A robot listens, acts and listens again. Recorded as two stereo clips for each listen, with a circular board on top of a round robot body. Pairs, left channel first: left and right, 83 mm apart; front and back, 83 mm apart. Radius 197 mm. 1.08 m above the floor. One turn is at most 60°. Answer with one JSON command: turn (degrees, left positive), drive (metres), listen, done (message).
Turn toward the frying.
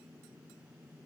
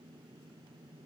{"listen": true}
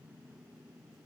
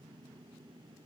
{"listen": true}
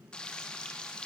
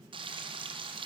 {"turn": 60}
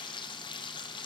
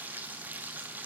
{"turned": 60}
{"turn": 60}
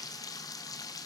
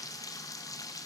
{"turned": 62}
{"turn": 45}
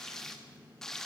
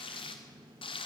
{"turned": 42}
{"done": "Facing the frying, 1 to 2 m away."}